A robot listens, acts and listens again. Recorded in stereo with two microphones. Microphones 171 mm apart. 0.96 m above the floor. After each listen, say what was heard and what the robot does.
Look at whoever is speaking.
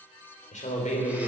The man speaking: about 45° left or 135° left. Turn 45° left.
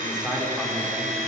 Facing the man speaking.